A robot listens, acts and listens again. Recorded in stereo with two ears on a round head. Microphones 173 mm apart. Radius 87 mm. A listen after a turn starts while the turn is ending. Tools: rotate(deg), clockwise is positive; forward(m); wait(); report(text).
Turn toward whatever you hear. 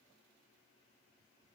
wait()
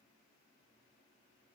wait()
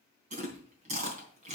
rotate(40)
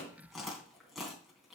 report("Facing the chewing.")